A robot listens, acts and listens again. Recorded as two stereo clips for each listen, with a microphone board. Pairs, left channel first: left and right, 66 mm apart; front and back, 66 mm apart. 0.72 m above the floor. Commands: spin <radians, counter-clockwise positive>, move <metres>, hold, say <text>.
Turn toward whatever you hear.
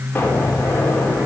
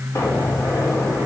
spin 0.61
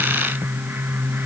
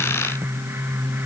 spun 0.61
say Facing where the explosion came from. I can't hear it now.